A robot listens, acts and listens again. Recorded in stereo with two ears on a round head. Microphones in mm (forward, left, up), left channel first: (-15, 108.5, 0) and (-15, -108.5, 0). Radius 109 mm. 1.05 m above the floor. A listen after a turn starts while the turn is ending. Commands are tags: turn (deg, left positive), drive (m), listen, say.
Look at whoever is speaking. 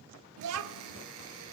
<turn deg="-65"/>
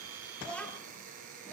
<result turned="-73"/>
<say>Found it: a child speaking, straight ahead, 1 to 2 m away.</say>